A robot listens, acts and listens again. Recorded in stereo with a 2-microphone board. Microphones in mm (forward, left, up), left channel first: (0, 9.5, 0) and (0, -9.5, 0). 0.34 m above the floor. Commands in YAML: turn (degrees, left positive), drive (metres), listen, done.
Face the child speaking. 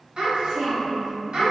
turn: -50
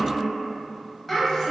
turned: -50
turn: 10
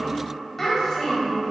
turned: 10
turn: 25
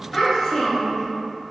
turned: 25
turn: 20
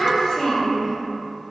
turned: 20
turn: 15
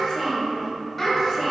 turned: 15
done: "Found it: a child speaking, straight ahead."